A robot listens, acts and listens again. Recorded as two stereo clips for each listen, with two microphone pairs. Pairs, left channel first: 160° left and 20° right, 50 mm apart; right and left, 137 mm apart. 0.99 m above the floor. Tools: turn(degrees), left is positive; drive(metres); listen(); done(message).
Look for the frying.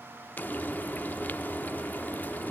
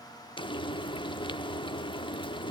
turn(degrees=-145)
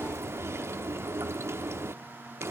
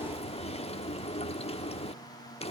turn(degrees=-45)
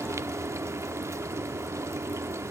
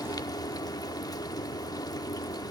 turn(degrees=-25)
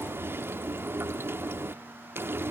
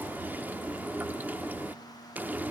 turn(degrees=15)
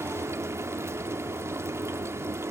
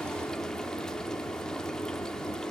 done("Found it: frying, straight ahead, under 1 m away.")